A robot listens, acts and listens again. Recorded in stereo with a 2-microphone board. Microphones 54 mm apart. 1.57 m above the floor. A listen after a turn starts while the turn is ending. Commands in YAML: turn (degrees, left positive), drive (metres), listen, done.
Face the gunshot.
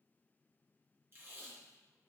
listen: true
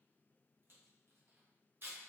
listen: true
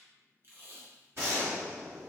turn: -55
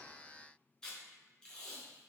listen: true
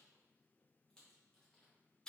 done: "I heard a gunshot, but can't make it out now. It was about straight ahead or 70° right."